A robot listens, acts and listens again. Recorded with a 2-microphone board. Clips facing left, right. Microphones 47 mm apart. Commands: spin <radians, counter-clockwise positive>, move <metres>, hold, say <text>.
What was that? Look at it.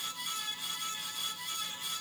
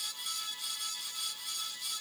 hold
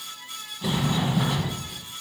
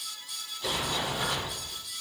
spin 0.52
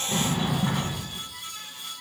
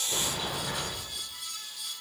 spin 2.44
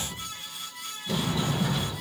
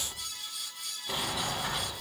spin -0.35
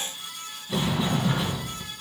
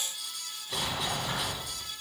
say Facing the sliding door.